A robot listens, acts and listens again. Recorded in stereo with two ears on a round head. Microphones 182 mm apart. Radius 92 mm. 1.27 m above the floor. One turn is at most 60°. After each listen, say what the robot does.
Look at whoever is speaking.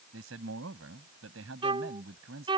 Turn 60° right.
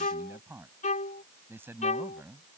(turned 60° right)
Turn 10° right.
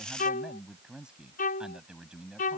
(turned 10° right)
Facing the man speaking.